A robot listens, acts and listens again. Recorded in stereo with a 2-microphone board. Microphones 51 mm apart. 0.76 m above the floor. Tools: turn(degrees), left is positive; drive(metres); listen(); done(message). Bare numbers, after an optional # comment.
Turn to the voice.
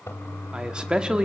# The man speaking: about 20° right or 160° right.
turn(-20)
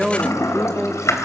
done("Facing the man speaking.")